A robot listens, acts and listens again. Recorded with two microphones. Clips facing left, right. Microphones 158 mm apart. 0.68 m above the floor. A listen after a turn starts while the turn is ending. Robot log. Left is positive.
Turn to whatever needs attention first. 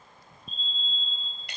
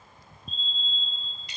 cmd yaw +30
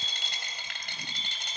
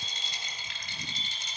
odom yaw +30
note: So it is at 145° left.
cmd yaw +145
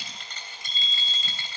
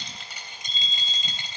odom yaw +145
note: The fire alarm is now 50° left.
cmd yaw +50
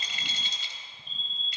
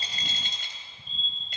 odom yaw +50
end: Found it: a fire alarm, straight ahead, over 4 m away.